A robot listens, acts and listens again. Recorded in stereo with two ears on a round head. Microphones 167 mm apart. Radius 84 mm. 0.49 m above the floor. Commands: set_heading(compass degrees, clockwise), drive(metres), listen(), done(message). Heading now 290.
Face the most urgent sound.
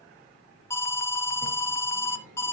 set_heading(260)
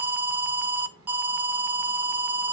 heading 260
set_heading(270)
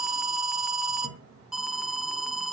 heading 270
done("Found it: an alarm, straight ahead, under 1 m away.")